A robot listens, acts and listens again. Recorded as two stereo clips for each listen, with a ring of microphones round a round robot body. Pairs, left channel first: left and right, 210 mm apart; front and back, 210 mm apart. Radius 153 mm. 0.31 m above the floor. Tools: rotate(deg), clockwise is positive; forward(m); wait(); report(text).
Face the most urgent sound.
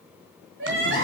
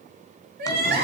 rotate(145)
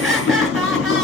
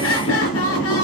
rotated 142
wait()
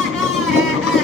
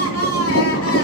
wait()
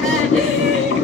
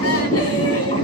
report("Facing where the crying came from. I can't hear it now.")